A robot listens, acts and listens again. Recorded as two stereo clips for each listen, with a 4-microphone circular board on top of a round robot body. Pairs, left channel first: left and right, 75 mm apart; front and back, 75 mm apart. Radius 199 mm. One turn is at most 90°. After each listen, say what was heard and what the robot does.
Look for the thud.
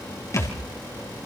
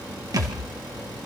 The thud: 140° left. Turn 90° left.
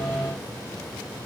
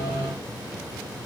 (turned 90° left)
Nothing new. It was at 50° left. Turn 50° left.
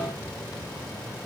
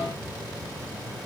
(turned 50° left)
I heard a thud from this way, but can't make it out now.